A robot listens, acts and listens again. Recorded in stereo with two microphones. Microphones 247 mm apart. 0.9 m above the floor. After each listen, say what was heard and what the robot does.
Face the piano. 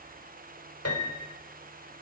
Turn 90° left.
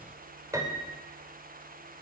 So it is at 15° right. Turn 15° right.
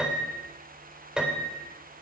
Found it: a piano, straight ahead.